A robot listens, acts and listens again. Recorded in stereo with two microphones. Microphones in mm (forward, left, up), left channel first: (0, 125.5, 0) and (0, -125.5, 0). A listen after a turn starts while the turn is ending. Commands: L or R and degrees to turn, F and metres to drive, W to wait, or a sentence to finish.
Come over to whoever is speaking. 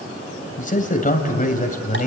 L35
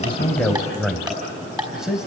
F1.0
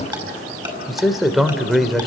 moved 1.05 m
F1.0
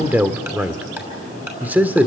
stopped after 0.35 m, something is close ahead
I am next to the man speaking.